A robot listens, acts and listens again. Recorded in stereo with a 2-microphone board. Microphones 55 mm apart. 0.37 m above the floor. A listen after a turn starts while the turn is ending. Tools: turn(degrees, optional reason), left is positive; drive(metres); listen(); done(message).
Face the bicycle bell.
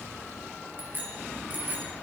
turn(degrees=-35, reason="The bicycle bell: about 35° right or 145° right.")
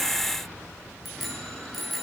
done("Found it: a bicycle bell, straight ahead, over 4 m away.")